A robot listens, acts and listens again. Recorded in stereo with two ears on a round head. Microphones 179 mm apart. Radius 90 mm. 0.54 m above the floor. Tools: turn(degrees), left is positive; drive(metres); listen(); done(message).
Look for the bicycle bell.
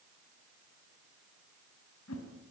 listen()
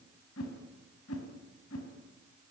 listen()
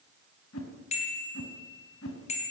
turn(degrees=35)
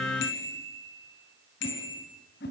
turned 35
turn(degrees=115)
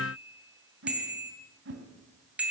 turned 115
done("Found it: a bicycle bell, straight ahead.")